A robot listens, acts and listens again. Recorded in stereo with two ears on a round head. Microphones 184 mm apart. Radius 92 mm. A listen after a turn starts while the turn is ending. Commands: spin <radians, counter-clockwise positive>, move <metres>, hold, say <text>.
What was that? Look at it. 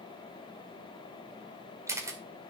spin -0.52
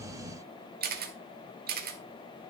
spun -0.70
spin -2.18
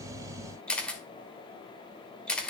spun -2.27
say Facing the camera shutter, 1 to 2 m away.